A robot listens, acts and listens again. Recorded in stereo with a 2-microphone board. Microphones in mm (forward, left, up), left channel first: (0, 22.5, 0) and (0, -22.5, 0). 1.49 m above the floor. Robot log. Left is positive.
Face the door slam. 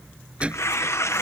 note: The door slam: about 25° right or 155° right.
cmd yaw -25
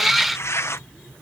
cmd idle
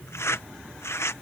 end: I heard a door slam, but can't make it out now. It was about straight ahead or 130° right.